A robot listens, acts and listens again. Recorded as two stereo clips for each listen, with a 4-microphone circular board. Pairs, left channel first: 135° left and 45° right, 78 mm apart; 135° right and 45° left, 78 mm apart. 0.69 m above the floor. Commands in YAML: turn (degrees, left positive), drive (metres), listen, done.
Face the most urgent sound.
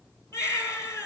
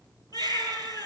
turn: -170
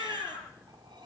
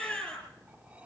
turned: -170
turn: -60
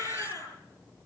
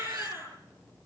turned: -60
turn: -10
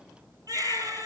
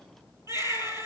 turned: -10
done: "Facing the baby crying, over 4 m away."